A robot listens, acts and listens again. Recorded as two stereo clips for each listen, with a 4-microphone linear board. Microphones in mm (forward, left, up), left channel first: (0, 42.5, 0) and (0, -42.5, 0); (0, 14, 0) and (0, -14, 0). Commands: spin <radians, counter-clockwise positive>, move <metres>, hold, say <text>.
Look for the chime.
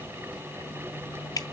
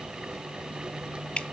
hold
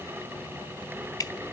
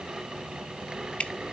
hold
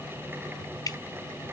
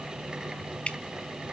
say I can't make out a chime to turn to.